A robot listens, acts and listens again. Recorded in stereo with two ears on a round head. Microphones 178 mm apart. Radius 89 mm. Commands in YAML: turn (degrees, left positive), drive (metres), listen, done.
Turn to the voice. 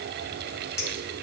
listen: true
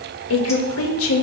turn: 90
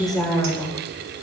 done: "Found it: a woman speaking, straight ahead."